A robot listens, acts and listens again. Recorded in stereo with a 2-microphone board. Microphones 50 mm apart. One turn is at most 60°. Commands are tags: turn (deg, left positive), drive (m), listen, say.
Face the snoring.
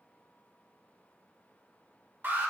<listen/>
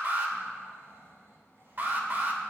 <turn deg="-60"/>
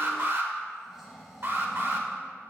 <say>Facing the snoring.</say>